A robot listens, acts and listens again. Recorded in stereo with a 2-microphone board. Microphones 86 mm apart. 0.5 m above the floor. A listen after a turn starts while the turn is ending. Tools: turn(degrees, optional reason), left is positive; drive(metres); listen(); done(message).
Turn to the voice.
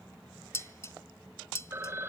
listen()
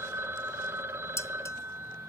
listen()
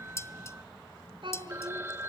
turn(degrees=-65, reason="The child speaking: about 65° right or 115° right.")
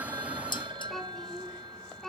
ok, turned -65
done("Found it: a child speaking, straight ahead.")